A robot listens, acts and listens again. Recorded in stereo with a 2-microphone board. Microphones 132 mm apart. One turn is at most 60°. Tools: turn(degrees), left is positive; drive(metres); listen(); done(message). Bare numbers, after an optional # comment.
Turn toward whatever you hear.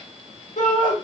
turn(60)
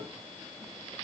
# Nothing new. It was at 30° left.
turn(30)
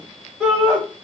done("Found it: a shout, straight ahead.")